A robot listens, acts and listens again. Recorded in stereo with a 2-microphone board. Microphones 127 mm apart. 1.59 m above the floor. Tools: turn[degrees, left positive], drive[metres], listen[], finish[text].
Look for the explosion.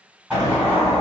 Action: turn[-30]
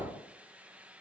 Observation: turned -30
Action: listen[]
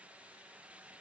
Action: finish[I heard an explosion, but can't make it out now. It was about 15° left or 135° right.]